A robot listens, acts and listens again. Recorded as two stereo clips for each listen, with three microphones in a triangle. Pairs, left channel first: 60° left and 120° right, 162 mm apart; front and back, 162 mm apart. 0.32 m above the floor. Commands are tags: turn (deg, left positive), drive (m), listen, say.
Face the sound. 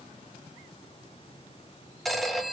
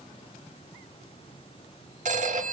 <turn deg="150"/>
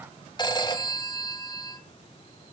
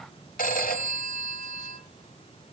<say>Facing the phone ringing.</say>